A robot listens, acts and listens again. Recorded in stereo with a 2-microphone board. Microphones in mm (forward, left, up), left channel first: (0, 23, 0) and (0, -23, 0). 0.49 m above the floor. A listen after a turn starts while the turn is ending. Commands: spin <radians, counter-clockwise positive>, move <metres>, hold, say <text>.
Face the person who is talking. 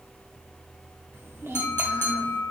spin -1.22
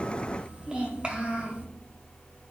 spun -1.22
spin -0.52
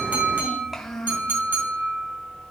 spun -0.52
say Facing the child speaking, 1 to 2 m away.